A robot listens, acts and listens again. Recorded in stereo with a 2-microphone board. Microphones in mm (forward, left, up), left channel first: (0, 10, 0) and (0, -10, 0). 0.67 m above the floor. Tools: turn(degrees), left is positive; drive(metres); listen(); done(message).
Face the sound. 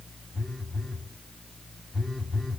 turn(degrees=20)
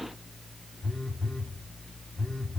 turn(degrees=135)
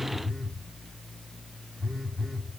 turn(degrees=10)
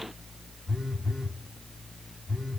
done("Facing the phone buzzing, 2 to 4 m away.")